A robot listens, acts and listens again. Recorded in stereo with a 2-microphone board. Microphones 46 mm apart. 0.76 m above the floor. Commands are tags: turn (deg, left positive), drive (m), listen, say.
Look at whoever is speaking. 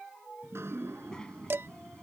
<turn deg="20"/>
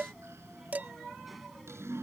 <say>Found it: a child speaking, straight ahead.</say>